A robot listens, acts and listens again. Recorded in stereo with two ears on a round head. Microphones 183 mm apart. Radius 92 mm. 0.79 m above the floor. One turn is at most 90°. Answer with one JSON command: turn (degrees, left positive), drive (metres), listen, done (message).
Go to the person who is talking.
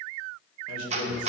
{"turn": 90}
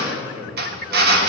{"turn": -10}
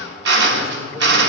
{"drive": 1.0}
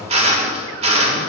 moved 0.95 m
{"listen": true}
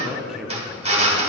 {"drive": 1.0}
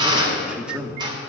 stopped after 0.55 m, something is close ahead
{"done": "I am next to the man speaking."}